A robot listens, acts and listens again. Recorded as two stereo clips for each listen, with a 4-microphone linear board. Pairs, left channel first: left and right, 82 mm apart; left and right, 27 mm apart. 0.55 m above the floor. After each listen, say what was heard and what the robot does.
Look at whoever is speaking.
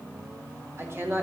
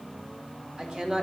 The woman speaking: about 30° right or 150° right. Turn 30° right.
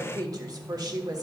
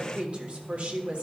So it is at 115° right. Turn 115° right.
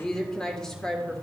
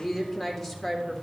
The woman speaking is now 10° left. Turn 10° left.
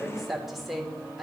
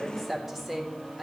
Facing the woman speaking, 1 to 2 m away.